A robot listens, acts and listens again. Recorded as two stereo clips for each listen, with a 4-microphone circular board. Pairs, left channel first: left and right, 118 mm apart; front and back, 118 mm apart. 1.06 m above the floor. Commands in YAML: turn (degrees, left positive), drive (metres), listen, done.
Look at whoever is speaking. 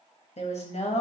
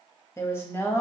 turn: 70
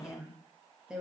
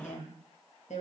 done: "Facing the woman speaking."